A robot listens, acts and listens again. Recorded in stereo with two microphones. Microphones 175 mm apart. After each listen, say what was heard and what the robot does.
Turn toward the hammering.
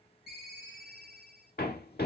The hammering: about 60° left or 120° left. Turn 60° left.
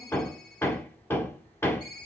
So it is at 15° left. Turn 15° left.
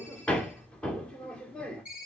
Found it: hammering, straight ahead, 1 to 2 m away.